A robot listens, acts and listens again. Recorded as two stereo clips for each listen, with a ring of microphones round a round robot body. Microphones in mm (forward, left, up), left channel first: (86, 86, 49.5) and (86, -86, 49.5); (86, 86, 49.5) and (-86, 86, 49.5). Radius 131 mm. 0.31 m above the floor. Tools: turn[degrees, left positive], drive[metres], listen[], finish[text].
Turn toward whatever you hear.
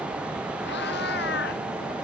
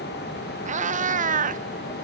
Thought: The cat meowing: 140° left.
Action: turn[140]
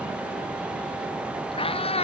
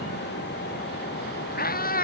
Thought: The cat meowing is now 35° left.
Action: turn[35]
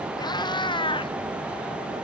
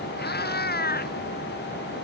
Thought: The cat meowing is now 30° left.
Action: turn[30]
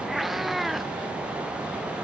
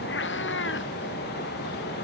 Action: finish[Found it: a cat meowing, straight ahead.]